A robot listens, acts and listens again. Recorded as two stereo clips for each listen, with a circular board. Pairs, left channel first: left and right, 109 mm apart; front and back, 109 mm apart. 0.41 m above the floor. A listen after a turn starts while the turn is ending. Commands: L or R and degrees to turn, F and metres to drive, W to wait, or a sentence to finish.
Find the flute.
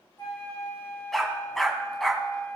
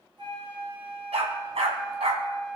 L145
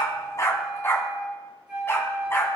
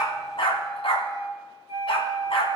R10
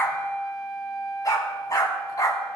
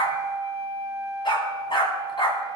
Facing the flute, 2 to 4 m away.